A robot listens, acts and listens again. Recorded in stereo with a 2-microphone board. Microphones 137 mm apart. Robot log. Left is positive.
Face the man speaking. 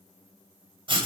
cmd idle
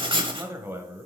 cmd yaw -30
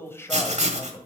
note: So it is at 25° left.
cmd yaw +25
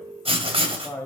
note: The man speaking is now 20° left.
cmd yaw +20
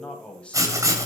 note: The man speaking is now 10° left.
cmd yaw +10
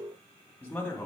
note: The man speaking is now 15° left.
cmd yaw +15
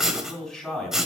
end: Facing the man speaking, 2 to 4 m away.